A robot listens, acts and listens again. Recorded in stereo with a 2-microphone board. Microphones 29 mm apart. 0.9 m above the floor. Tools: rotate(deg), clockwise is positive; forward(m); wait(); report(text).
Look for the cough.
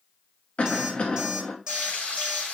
rotate(-45)
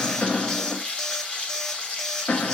rotate(-85)
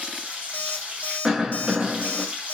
rotate(15)
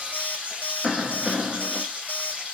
report("Found it: a cough, straight ahead.")